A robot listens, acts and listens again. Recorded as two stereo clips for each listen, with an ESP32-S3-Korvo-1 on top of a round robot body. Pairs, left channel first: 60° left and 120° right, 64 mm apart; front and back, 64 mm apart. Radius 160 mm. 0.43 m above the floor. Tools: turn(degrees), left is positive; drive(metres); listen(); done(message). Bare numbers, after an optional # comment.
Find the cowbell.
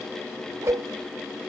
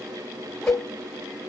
# The cowbell: 55° right.
turn(-55)
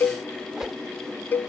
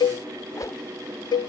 done("Found it: a cowbell, straight ahead.")